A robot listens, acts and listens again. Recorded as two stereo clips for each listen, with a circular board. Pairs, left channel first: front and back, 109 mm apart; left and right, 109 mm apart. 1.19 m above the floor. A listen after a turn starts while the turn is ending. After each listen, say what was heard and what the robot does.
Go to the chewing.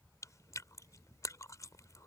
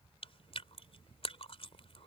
The chewing: 60° left. Turn 60° left.
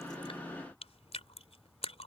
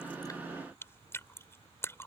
The chewing is now 25° left. Turn 25° left.
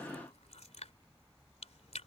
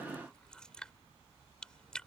Drive 1.0 m forward.
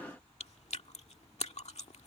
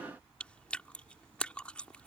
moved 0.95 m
The chewing is now 10° left. Turn 10° left.
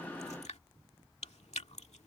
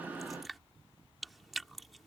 Drive 1.0 m forward.
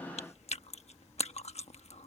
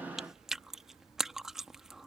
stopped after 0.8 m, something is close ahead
Arrived at the chewing, straight ahead.